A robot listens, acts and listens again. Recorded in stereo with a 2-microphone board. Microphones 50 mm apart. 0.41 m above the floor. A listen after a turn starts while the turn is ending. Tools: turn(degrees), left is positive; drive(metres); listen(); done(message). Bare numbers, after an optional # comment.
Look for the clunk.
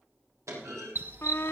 turn(-90)
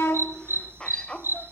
done("Facing where the clunk came from. I can't hear it now.")